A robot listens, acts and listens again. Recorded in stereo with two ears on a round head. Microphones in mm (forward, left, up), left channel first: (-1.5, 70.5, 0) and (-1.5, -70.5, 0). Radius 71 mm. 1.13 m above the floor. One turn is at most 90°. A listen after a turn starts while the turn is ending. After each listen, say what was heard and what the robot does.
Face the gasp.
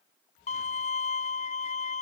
Keep listening.
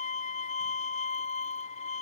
Keep listening.
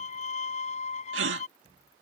Turn 90° right.
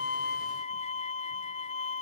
Facing where the gasp came from. I can't hear it now.